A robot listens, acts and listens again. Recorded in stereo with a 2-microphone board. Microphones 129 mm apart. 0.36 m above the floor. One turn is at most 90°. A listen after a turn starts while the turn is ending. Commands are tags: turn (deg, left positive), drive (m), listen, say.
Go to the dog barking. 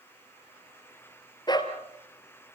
<turn deg="35"/>
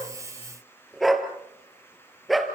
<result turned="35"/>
<drive m="1.0"/>
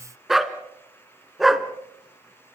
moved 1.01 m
<drive m="1.0"/>
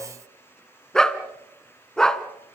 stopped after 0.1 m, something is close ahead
<say>Arrived at the dog barking, straight ahead.</say>